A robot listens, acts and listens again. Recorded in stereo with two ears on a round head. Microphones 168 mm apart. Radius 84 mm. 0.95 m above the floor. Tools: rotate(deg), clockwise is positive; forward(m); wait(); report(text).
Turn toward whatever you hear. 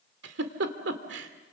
rotate(70)
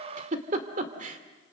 rotate(40)
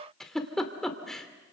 report("Facing the giggle, 2 to 4 m away.")